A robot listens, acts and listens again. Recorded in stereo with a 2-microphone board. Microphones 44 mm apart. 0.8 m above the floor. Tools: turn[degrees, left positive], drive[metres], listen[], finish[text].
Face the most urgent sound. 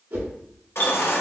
Thought: The baby crying: about 70° left or 110° left.
Action: turn[70]
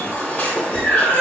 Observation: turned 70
Thought: So it is at 30° left.
Action: turn[30]
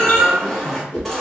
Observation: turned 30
Action: finish[Facing the baby crying.]